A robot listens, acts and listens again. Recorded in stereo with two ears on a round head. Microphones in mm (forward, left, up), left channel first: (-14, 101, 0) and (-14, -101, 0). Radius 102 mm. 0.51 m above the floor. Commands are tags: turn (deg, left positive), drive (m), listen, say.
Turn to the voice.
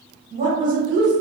<turn deg="-35"/>
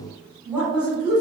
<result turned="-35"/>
<say>Found it: a woman speaking, straight ahead, 1 to 2 m away.</say>